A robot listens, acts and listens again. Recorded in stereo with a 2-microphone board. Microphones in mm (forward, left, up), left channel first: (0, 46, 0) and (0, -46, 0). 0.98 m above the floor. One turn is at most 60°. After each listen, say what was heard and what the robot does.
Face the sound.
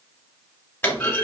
The clunk: about 20° left or 160° left. Turn 20° left.
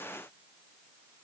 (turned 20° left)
Keep listening.
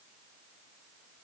I heard a clunk, but can't make it out now. It was about straight ahead or 140° left.